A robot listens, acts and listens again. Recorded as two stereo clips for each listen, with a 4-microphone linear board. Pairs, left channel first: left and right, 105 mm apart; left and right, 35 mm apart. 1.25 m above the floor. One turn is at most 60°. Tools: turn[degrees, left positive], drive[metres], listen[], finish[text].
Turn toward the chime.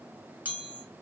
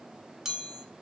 Action: turn[-30]
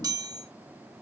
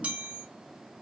Thought: So it is at 135° right.
Action: turn[-60]
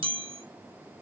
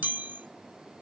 Thought: The chime is now 80° right.
Action: turn[-60]
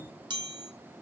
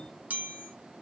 Thought: The chime is now 60° right.
Action: turn[-60]
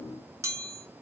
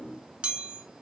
Thought: The chime is now 35° right.
Action: turn[-35]
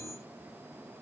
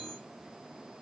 Action: listen[]
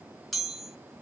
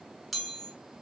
Action: finish[Facing the chime, under 1 m away.]